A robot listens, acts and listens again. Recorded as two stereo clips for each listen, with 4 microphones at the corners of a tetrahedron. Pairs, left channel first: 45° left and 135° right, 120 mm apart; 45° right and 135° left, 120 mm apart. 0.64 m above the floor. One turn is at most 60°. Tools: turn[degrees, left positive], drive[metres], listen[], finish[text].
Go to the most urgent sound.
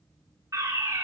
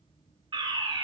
Thought: The fire alarm: 170° left.
Action: turn[60]
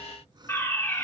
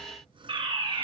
Thought: The fire alarm is now 110° left.
Action: turn[60]
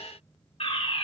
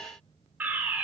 Thought: The fire alarm is now 65° left.
Action: turn[60]
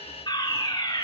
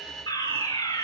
Action: drive[1.0]
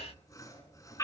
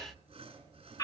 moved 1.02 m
Action: drive[1.0]
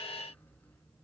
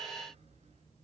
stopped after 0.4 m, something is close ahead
Action: listen[]
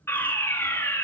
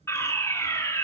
Action: finish[I am next to the fire alarm.]